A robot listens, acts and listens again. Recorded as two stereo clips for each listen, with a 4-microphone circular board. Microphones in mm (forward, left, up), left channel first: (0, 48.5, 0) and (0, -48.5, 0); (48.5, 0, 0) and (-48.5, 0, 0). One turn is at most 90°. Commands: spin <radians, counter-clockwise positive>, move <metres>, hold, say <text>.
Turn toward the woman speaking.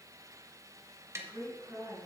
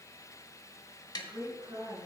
spin 1.57
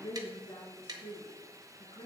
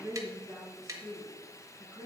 spin 1.48
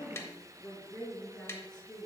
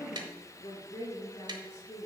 say Found it: a woman speaking, straight ahead.